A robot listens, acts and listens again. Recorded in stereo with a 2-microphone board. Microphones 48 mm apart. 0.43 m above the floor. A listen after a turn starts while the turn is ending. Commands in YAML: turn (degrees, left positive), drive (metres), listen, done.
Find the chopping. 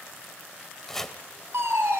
turn: 30
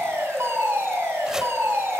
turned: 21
listen: true
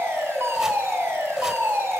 listen: true
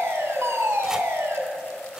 done: "I heard chopping, but can't make it out now. It was about 15° right or 150° left."